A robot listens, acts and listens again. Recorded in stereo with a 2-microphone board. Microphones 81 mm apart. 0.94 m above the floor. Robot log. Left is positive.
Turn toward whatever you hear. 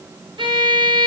cmd yaw -90
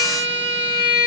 note: So it is at 20° right.
cmd yaw -20
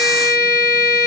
end: Found it: a violin, straight ahead.